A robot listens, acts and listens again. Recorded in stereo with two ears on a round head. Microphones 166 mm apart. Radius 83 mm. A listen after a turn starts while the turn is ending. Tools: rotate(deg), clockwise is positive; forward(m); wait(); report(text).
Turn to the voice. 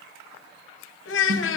rotate(-70)
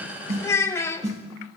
rotate(-15)
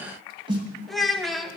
report("Found it: a child speaking, straight ahead.")